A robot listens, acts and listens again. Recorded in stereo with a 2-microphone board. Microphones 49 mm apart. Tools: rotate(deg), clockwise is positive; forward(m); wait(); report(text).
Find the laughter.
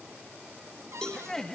rotate(-30)
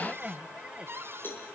rotate(25)
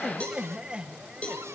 rotate(25)
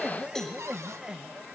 rotate(20)
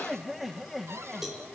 report("Facing the laughter, 2 to 4 m away.")